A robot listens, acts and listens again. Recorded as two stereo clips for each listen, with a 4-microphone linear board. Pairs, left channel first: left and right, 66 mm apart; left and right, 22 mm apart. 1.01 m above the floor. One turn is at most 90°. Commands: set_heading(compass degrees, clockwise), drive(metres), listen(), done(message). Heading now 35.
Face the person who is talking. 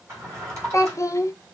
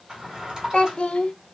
set_heading(345)
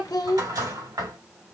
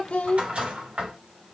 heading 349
set_heading(269)
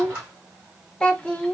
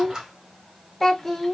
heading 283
set_heading(268)
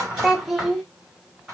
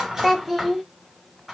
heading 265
done("Facing the child speaking, under 1 m away.")